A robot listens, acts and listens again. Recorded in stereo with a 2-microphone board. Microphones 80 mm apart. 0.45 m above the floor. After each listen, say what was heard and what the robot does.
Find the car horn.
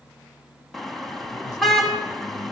Turn 30° left.
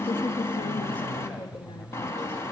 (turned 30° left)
So it is at 145° left. Turn 145° left.
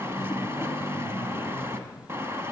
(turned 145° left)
The car horn is now 30° right. Turn 30° right.
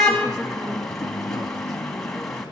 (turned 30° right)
Facing the car horn, 2 to 4 m away.